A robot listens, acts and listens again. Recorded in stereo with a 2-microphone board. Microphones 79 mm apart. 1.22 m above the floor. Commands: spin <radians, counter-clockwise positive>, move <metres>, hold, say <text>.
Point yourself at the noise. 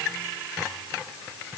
hold
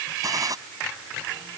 spin -0.87
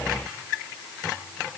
hold
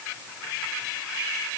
say I heard a gunshot, but can't make it out now. It was about straight ahead or 80° right.